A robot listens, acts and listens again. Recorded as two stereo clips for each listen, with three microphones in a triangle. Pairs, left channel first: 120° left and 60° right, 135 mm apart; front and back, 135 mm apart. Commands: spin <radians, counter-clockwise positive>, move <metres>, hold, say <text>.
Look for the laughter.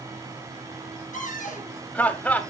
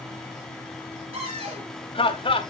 spin 0.70
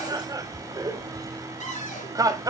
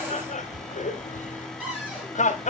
say Found it: laughter, straight ahead.